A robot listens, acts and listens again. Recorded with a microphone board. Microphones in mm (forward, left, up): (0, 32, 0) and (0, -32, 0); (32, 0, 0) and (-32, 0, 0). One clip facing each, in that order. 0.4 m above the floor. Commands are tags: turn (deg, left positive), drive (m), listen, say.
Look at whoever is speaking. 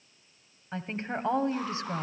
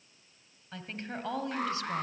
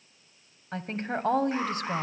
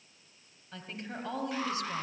<turn deg="30"/>
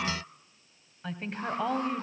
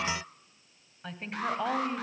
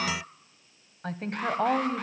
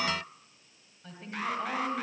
<say>Found it: a woman speaking, straight ahead.</say>